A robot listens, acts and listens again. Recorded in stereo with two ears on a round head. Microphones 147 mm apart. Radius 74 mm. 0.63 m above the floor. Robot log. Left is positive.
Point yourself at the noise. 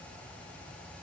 cmd idle
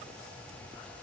cmd idle
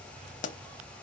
note: The pop: about 45° left or 135° left.
cmd yaw +45
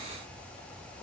cmd idle
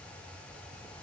end: I heard a pop, but can't make it out now. It was about straight ahead or 90° left.